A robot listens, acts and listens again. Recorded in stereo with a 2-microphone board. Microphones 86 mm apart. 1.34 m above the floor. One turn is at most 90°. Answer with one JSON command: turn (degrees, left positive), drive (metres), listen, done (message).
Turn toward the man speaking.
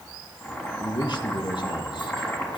{"turn": 60}
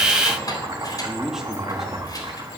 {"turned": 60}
{"done": "Facing the man speaking."}